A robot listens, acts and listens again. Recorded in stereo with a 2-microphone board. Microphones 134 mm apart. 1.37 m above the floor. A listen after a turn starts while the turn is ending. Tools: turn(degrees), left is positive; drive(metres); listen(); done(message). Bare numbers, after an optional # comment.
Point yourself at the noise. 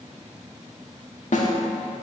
# The snare drum: about 70° left or 110° left.
turn(70)
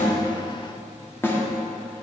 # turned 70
# So it is at 20° left.
turn(20)
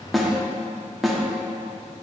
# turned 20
done("Found it: a snare drum, straight ahead, 1 to 2 m away.")